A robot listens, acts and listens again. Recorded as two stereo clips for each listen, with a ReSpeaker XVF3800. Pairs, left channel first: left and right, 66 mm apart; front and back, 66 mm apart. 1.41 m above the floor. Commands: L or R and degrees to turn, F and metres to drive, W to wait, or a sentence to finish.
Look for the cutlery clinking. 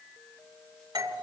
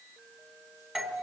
W
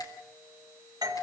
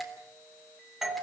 W
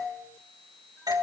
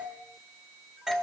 I can't make out cutlery clinking to turn to.